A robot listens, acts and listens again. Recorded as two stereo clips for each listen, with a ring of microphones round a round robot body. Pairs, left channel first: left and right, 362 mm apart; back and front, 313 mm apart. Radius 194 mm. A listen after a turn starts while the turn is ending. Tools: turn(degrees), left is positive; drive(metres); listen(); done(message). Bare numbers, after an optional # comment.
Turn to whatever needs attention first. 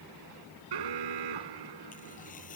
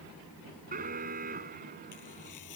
# The alarm: 70° right.
turn(-70)
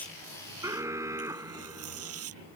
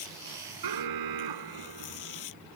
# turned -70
# The alarm is now 10° right.
turn(-10)
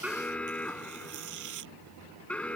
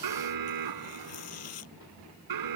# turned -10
done("Facing the alarm.")